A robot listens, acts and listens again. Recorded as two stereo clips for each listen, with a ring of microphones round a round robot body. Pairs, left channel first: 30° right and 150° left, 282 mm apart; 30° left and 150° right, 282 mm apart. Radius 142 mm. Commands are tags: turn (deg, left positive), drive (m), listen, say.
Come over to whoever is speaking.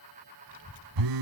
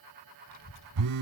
<turn deg="10"/>
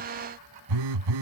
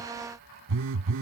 <drive m="1.0"/>
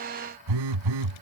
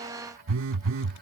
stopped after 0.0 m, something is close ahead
<listen/>
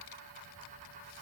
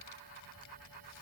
<say>Blocked. The child speaking is further on, straight ahead.</say>